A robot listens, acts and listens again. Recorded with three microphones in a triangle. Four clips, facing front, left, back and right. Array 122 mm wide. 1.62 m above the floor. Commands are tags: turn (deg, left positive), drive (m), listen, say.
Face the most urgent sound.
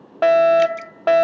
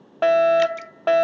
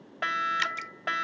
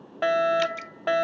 <turn deg="30"/>
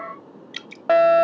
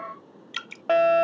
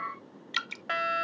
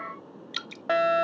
<turn deg="15"/>
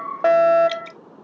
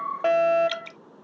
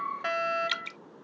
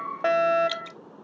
<say>Facing the fire alarm.</say>